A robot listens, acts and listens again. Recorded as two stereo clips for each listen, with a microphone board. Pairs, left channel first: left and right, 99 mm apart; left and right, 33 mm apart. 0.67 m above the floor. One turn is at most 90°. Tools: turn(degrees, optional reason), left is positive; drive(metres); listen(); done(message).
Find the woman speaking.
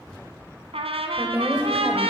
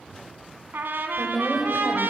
turn(degrees=-15, reason="The woman speaking: about 15° right or 165° right.")
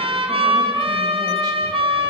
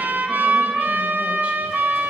listen()
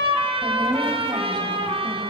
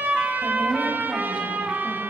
listen()
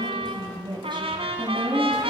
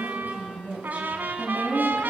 turn(degrees=-90, reason="So it is at 125° right.")
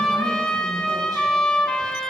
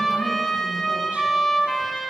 turn(degrees=-35, reason="Nothing new. It was at 35° right.")
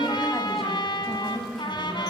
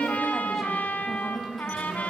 done("Found it: a woman speaking, straight ahead.")